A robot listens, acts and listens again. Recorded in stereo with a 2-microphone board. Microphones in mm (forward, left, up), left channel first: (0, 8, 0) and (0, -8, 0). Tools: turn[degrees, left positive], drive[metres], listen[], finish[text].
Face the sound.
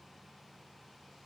Action: listen[]
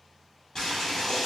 Thought: The boiling: about 35° left or 145° left.
Action: turn[35]
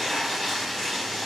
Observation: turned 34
Action: finish[Facing the boiling.]